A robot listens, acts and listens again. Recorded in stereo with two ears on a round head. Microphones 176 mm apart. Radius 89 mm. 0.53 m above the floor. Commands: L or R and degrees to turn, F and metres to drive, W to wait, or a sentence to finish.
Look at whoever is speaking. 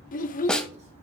L45
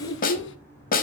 L85
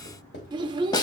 R25
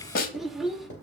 Found it: a child speaking, straight ahead.